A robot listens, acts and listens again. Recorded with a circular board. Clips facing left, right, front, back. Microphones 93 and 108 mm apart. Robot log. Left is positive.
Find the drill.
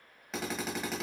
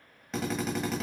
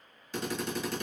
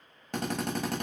note: The drill: straight behind.
cmd yaw +180
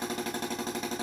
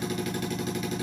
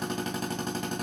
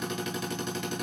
note: The drill is now 40° left.
cmd yaw +40
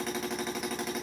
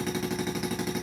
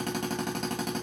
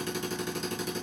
end: Facing the drill, 1 to 2 m away.